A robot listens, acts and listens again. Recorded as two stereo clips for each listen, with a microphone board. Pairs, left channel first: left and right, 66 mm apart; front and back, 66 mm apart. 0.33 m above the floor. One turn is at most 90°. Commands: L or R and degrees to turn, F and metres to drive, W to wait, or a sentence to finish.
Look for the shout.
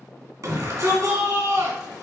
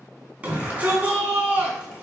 R90
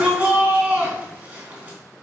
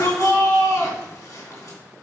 R25
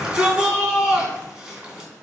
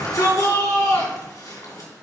R15
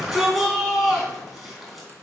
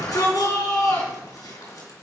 Facing the shout.